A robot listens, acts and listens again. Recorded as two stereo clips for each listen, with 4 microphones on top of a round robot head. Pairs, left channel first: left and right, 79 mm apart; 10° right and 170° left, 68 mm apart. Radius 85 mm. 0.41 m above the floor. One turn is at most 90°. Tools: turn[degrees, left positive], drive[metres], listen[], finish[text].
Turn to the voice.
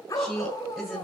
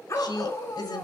Action: finish[Facing the woman speaking.]